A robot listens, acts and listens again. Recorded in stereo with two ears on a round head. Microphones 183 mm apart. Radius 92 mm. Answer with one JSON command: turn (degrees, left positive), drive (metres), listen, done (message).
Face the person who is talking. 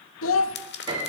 {"turn": 70}
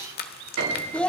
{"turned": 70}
{"done": "Facing the child speaking."}